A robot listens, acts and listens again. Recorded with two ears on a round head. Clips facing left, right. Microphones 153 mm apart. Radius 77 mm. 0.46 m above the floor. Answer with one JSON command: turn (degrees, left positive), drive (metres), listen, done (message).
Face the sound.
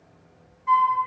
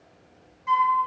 {"turn": -45}
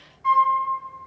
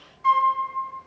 {"turn": -80}
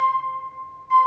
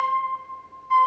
{"turn": 10}
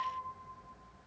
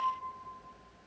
{"listen": true}
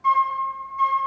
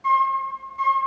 {"done": "Found it: a flute, straight ahead."}